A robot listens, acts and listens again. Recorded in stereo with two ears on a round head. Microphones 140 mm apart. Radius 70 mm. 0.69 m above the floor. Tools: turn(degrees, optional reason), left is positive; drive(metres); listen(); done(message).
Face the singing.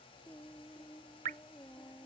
turn(degrees=30)
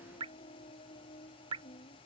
turn(degrees=140, reason="So it is at 140° left.")
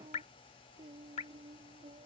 turn(degrees=-35, reason="The singing is now 35° right.")
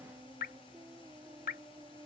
turn(degrees=-15, reason="The singing is now 15° right.")
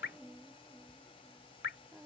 done("Found it: singing, straight ahead.")